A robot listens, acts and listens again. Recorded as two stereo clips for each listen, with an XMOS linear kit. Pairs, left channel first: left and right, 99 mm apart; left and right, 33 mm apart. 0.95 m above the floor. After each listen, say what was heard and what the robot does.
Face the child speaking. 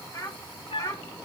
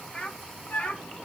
The child speaking: about 35° left or 145° left. Turn 35° left.
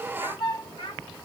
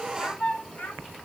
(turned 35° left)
So it is at 120° left. Turn 120° left.
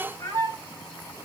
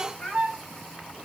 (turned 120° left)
The child speaking is now 35° left. Turn 35° left.
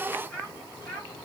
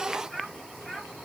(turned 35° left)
The child speaking is now 10° left. Turn 10° left.
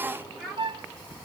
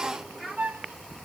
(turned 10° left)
Found it: a child speaking, straight ahead, over 4 m away.